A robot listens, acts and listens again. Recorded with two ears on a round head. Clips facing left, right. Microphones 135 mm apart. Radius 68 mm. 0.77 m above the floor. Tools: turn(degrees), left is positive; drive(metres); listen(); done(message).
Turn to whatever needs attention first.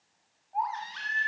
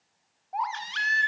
turn(degrees=-90)
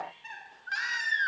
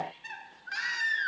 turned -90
done("Facing the baby crying.")